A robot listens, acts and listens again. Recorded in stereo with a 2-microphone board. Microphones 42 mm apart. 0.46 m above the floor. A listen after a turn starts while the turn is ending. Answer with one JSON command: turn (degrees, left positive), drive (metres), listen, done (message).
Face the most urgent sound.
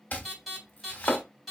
{"turn": 30}
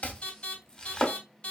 {"turn": 150}
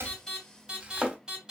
{"turn": -15}
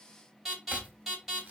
{"done": "Facing the alarm, 2 to 4 m away."}